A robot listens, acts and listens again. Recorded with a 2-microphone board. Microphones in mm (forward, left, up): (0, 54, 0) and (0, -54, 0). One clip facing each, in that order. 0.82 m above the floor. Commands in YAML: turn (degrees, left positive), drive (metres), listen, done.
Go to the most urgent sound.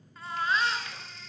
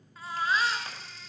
turn: 30
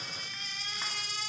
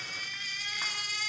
turn: 155
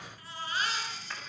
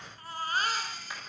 turn: -45
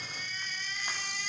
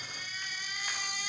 turn: -10
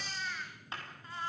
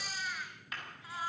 drive: 1.0
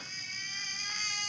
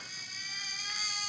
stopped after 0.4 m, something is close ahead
turn: -10
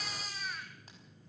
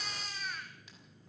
done: "Something is in my way. I am facing the baby crying but have not reached it."